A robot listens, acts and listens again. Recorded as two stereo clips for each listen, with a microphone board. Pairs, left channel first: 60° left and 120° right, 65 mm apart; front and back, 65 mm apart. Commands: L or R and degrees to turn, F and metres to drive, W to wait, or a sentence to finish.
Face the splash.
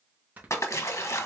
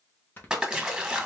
L100
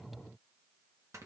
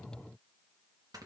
Facing where the splash came from. I can't hear it now.